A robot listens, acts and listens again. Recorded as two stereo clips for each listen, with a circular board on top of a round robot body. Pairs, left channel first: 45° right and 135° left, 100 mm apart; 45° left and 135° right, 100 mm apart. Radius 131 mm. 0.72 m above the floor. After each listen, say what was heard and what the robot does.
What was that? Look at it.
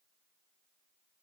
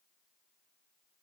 Keep listening.
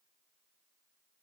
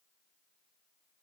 Keep listening.
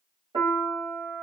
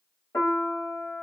The piano: 110° left. Turn 110° left.
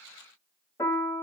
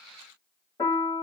The piano is now 10° left. Turn 10° left.
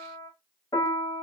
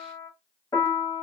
Found it: a piano, straight ahead, 1 to 2 m away.